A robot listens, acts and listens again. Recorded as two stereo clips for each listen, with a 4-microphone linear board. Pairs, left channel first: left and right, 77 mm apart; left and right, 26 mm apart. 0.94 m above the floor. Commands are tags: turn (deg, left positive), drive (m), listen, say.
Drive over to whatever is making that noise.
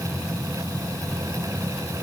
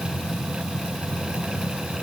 <listen/>
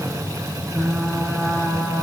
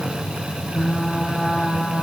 <turn deg="-30"/>
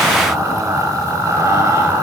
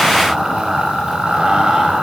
<turn deg="-140"/>
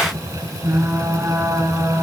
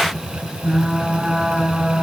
<turn deg="-40"/>
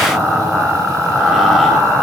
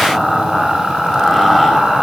<drive m="1.0"/>
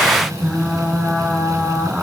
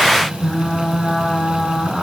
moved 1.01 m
<drive m="1.0"/>
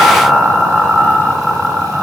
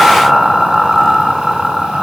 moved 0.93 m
<drive m="1.0"/>
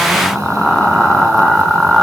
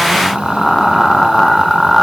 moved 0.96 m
<drive m="1.0"/>
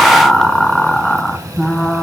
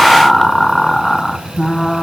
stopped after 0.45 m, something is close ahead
<turn deg="10"/>
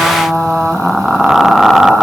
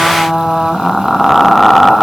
<say>Arrived at the frying, straight ahead.</say>